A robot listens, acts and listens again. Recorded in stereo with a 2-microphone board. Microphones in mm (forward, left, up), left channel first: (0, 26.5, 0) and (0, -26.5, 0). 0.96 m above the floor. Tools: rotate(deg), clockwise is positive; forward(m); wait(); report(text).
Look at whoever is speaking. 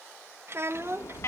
rotate(50)
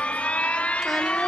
wait()
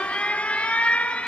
wait()
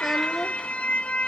report("I heard a child speaking, but can't make it out now. It was about straight ahead or 80° right.")